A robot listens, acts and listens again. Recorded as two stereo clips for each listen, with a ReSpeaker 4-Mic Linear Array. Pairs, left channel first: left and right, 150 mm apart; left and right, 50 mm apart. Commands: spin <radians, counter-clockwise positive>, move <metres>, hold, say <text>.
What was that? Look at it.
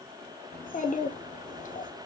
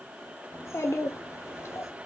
spin 1.13
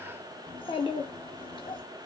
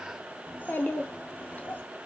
spin 0.70
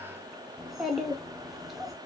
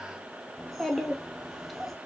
say Found it: a child speaking, straight ahead, under 1 m away.